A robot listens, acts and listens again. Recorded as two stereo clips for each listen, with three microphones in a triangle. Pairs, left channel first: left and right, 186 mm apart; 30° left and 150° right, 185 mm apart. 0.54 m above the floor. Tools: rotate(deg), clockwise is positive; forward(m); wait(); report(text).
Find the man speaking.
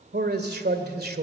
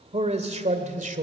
rotate(110)
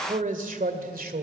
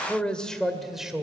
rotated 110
rotate(65)
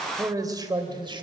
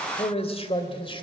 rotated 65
rotate(30)
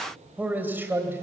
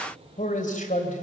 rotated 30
rotate(15)
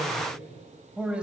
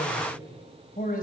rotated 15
report("Facing the man speaking.")